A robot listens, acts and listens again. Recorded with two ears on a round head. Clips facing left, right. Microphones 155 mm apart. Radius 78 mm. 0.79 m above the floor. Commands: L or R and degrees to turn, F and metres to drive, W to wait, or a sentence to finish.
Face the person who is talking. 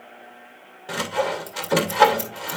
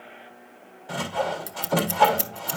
W
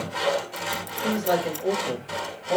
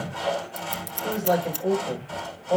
L30
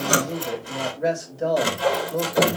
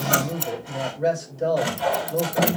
Found it: a man speaking, straight ahead, over 4 m away.